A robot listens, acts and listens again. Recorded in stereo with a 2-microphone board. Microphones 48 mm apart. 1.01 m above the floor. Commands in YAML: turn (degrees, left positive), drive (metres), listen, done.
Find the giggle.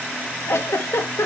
turn: 70
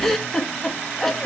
done: "Facing the giggle."